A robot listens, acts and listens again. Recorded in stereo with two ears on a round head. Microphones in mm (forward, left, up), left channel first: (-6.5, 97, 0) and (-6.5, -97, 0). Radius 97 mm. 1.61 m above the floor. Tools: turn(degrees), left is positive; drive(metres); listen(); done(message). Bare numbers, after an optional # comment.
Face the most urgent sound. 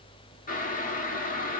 listen()
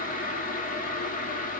listen()
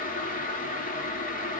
done("I can't make out anything urgent, only boiling.")